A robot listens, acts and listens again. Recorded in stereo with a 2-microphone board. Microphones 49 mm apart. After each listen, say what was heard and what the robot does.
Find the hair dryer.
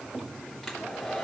Turn 30° left.
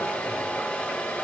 So it is at 145° left. Turn 145° left.
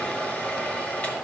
The hair dryer is now 35° left. Turn 35° left.
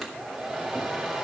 Facing the hair dryer.